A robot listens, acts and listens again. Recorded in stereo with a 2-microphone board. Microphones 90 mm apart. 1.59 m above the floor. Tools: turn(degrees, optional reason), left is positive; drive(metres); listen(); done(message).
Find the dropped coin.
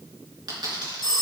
turn(degrees=-55, reason="The dropped coin: about 55° right or 125° right.")
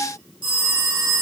listen()
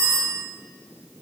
done("I heard a dropped coin, but can't make it out now. It was about straight ahead or 70° right.")